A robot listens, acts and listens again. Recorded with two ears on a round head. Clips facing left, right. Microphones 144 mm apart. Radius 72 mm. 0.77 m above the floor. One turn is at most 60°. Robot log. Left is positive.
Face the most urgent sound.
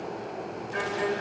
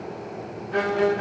cmd idle
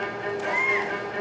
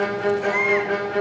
note: The baby crying: about 65° right or 115° right.
cmd yaw -60
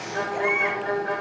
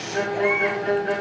end: Found it: a baby crying, straight ahead.